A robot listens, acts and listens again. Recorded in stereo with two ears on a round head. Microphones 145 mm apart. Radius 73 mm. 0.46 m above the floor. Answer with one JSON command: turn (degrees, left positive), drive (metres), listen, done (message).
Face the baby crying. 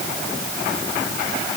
{"listen": true}
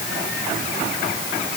{"listen": true}
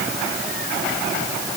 {"done": "I can't make out a baby crying."}